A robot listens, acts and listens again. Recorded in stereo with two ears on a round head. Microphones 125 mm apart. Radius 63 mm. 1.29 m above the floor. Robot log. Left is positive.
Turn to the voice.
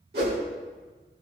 cmd idle
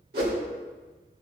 cmd idle
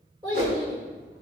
note: The child speaking: about 35° right or 145° right.
cmd yaw -35
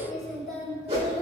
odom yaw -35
end: Facing the child speaking, over 4 m away.